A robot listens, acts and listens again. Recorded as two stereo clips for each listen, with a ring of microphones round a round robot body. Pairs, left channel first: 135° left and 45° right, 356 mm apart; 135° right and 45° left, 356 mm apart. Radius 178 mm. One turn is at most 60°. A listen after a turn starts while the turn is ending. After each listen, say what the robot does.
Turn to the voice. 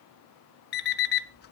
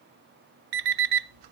Keep listening.
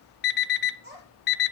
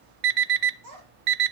Turn 20° left.
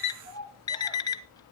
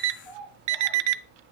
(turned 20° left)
Found it: a child speaking, straight ahead.